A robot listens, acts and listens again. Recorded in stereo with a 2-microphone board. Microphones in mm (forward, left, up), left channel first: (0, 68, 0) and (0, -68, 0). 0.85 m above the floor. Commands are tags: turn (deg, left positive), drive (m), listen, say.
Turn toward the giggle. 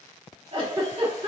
<turn deg="-40"/>
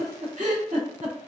<turn deg="-90"/>
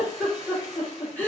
<turn deg="10"/>
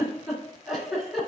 <say>Found it: a giggle, straight ahead, 2 to 4 m away.</say>